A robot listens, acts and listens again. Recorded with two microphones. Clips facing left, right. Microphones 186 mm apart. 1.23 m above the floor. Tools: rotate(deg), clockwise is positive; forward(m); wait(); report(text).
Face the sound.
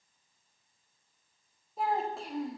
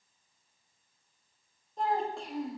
rotate(-30)
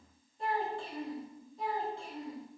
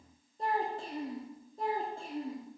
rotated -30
rotate(50)
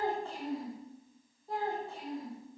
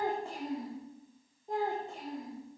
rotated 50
rotate(20)
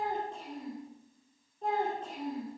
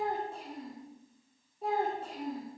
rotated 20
rotate(10)
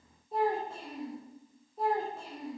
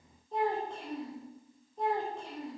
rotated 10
report("Found it: a child speaking, straight ahead.")